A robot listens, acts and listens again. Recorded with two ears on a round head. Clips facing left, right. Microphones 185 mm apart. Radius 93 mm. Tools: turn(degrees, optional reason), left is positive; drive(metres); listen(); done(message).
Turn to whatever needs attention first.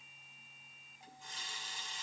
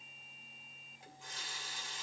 listen()
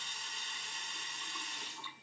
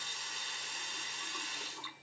listen()
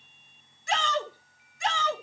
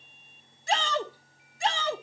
turn(degrees=-30, reason="The shout: about 30° right or 150° right.")
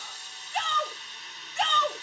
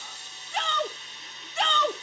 turn(degrees=-115, reason="So it is at 115° right.")
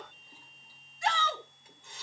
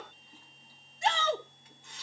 turn(degrees=-20, reason="The shout is now 20° right.")
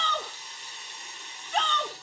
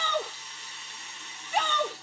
turn(degrees=-10, reason="The shout is now 10° right.")
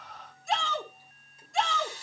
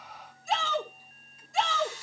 done("Facing the shout.")